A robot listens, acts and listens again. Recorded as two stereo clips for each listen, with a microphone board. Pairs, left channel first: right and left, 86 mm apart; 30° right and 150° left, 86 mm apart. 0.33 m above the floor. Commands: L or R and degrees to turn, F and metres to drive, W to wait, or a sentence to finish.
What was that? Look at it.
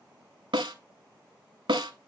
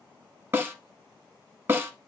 L90
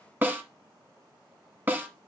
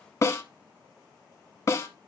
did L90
L25
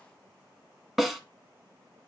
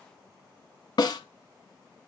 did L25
Found it: a snare drum, straight ahead, 1 to 2 m away.